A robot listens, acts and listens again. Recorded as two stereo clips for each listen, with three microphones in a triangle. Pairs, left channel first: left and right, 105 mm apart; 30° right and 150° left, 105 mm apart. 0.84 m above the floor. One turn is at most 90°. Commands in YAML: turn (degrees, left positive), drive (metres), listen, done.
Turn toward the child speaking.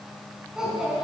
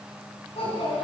done: "Facing the child speaking, over 4 m away."